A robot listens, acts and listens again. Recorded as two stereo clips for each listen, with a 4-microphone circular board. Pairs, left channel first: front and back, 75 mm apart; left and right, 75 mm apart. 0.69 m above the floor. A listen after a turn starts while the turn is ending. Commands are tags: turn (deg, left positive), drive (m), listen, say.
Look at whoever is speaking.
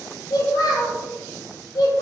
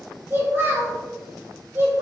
<turn deg="-30"/>
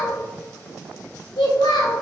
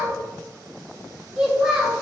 <turn deg="-10"/>
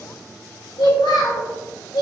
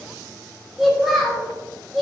<say>Facing the child speaking, 1 to 2 m away.</say>